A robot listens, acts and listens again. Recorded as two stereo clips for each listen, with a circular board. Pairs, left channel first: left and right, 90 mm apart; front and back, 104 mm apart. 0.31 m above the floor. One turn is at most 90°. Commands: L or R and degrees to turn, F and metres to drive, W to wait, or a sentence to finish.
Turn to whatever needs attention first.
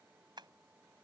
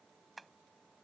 W
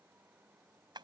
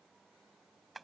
W
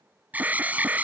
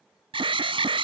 R90
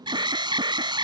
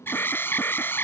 R70
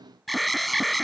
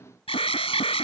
Facing the alarm.